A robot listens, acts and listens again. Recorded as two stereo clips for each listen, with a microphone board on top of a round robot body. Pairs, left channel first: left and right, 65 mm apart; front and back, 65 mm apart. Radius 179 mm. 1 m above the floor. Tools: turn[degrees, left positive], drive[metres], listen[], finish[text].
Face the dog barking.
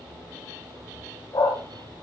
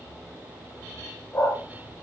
Thought: The dog barking: 60° left.
Action: turn[60]
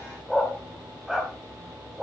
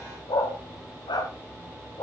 Thought: The dog barking is now 10° right.
Action: turn[-10]
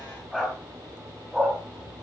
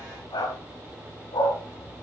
Thought: The dog barking is now 10° right.
Action: turn[-10]
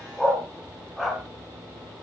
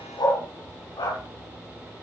Action: finish[Found it: a dog barking, straight ahead.]